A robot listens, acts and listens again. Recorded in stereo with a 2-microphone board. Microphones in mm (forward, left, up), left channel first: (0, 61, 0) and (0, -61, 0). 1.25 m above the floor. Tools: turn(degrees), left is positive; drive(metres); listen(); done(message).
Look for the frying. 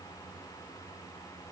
listen()
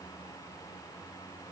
listen()
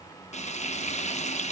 turn(degrees=60)
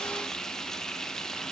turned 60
done("Found it: frying, straight ahead, 1 to 2 m away.")